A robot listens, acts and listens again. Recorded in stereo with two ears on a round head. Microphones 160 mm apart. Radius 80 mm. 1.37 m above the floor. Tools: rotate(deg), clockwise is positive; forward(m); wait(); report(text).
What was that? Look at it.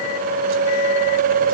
wait()
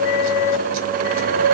wait()
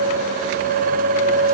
report("I can't make out anything.")